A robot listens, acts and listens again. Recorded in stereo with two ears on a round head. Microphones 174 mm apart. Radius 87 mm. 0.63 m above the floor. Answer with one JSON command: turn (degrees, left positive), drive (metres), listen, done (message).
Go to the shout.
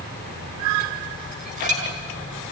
{"listen": true}
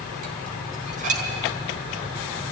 {"listen": true}
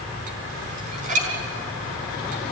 {"done": "I can't make out a shout, only dishes clattering."}